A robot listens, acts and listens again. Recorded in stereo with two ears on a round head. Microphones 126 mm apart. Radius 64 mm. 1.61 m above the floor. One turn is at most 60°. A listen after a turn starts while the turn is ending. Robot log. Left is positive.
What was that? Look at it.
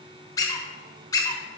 note: The squeak: about 25° left or 155° left.
cmd yaw +25
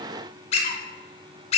note: So it is at 130° left.
cmd yaw +60
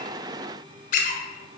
note: The squeak is now 65° left.
cmd yaw +60
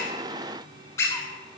note: The squeak is now 20° left.
cmd yaw +20
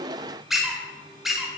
end: Facing the squeak, 1 to 2 m away.